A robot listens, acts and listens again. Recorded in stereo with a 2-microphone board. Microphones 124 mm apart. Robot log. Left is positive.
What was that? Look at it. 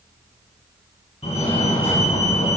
note: The fire alarm: about 60° left or 120° left.
cmd yaw +60
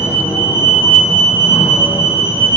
note: So it is at 50° left.
cmd yaw +50
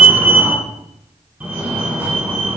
note: The fire alarm is now 15° right.
cmd yaw -15
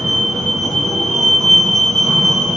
end: Facing the fire alarm.